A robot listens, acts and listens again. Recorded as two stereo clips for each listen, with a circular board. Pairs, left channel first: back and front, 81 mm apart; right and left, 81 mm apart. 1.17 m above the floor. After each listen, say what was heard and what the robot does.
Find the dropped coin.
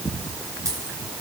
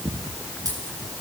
The dropped coin: 50° left. Turn 50° left.
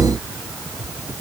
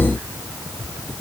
Facing where the dropped coin came from. I can't hear it now.